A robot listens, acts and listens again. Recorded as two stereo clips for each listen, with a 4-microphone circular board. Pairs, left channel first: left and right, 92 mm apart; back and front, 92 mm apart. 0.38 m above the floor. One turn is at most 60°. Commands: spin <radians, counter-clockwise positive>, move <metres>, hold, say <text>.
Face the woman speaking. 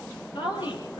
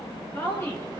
spin 1.05
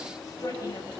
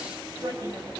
spin 0.79
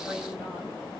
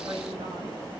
hold
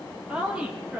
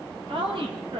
spin -0.26
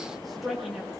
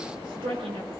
say Facing the woman speaking, over 4 m away.